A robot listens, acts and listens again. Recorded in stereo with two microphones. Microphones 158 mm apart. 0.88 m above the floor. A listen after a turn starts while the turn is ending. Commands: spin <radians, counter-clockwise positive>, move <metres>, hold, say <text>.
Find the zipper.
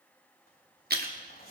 spin 1.57
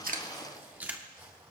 spin -0.26
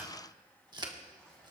say Facing the zipper, over 4 m away.